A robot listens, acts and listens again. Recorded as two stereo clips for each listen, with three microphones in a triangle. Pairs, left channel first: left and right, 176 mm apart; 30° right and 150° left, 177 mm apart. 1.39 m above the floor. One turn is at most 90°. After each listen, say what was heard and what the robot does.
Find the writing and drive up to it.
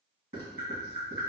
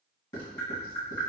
The writing: 60° right. Turn 60° right.
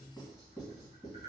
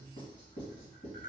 Drive 1.0 m forward.
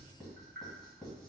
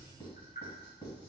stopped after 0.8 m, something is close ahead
Arrived at the writing, straight ahead.